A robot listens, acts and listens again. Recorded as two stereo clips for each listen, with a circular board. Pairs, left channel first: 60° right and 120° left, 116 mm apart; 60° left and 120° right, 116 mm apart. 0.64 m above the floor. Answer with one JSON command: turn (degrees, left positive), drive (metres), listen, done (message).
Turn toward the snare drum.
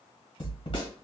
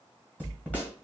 {"turn": -15}
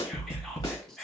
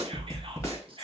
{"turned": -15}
{"done": "Facing the snare drum, 1 to 2 m away."}